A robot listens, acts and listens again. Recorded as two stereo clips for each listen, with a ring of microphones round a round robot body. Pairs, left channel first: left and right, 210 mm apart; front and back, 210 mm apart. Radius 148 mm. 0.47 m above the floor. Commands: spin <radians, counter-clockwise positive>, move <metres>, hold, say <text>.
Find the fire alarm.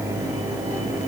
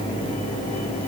hold
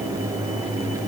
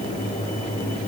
hold
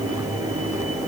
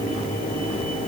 say I can't make out a fire alarm to turn to.